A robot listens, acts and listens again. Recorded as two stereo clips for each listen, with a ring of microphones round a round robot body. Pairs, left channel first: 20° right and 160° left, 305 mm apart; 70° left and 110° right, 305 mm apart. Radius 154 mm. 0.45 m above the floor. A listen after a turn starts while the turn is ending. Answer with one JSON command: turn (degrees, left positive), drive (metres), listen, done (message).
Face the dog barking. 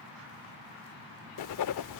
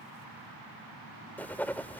{"listen": true}
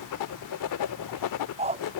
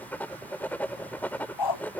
{"turn": 85}
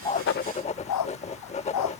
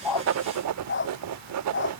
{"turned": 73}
{"turn": 15}
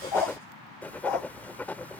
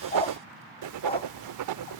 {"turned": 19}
{"done": "Facing the dog barking."}